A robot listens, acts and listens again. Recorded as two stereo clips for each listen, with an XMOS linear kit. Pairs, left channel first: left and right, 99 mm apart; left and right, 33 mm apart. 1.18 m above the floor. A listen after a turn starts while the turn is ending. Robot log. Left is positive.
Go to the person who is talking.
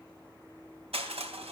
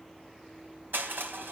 cmd idle
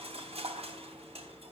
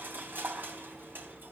cmd idle
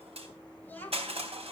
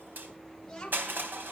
note: The child speaking: about 20° left or 160° left.
cmd yaw +20
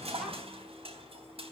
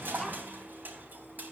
cmd idle
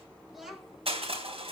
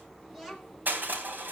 cmd fwd 1.0
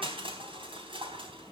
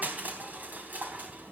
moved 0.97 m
cmd idle
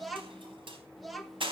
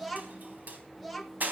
cmd fwd 1.0
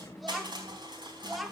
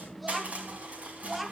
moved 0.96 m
cmd fwd 1.0
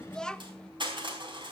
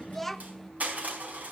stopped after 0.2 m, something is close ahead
end: I am next to the child speaking.